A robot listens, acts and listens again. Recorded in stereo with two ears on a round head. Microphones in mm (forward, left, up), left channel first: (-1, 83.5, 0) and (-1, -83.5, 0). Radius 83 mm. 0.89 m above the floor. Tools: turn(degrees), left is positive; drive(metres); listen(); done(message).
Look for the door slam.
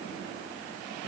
listen()
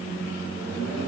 listen()
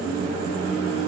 done("I can't make out a door slam to turn to.")